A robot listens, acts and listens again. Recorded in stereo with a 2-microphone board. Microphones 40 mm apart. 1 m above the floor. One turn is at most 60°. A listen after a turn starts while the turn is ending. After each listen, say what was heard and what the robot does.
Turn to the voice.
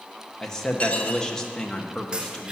Turn 30° left.
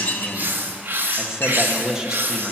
So it is at 15° right. Turn 15° right.
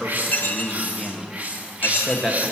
Found it: a man speaking, straight ahead, 1 to 2 m away.